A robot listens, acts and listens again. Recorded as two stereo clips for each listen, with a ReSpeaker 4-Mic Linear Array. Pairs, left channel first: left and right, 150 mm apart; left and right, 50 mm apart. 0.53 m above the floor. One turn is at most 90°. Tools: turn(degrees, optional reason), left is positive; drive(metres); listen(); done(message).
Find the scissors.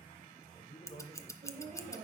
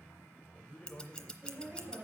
turn(degrees=20, reason="The scissors: about 20° left or 160° left.")
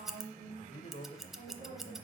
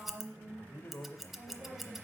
done("Facing the scissors, under 1 m away.")